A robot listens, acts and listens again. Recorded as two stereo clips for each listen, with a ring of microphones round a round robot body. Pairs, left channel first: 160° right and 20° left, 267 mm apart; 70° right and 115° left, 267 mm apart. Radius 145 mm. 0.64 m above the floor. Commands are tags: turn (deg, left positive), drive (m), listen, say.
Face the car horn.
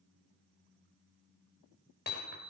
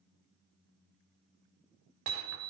<listen/>
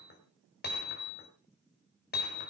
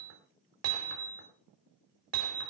<listen/>
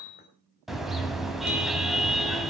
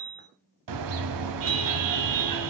<turn deg="110"/>
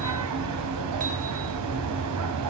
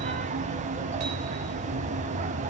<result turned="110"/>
<turn deg="45"/>
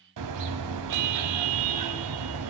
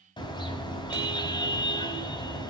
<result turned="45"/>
<say>Found it: a car horn, straight ahead.</say>